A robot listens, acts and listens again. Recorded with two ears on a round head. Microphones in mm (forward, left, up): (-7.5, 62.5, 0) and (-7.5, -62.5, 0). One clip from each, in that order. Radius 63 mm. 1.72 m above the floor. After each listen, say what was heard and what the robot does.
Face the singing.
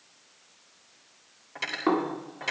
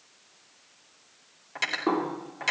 Keep listening.
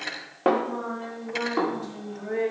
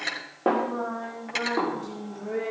The singing: about 20° left or 160° left. Turn 20° left.
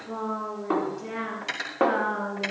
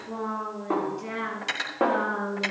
Facing the singing.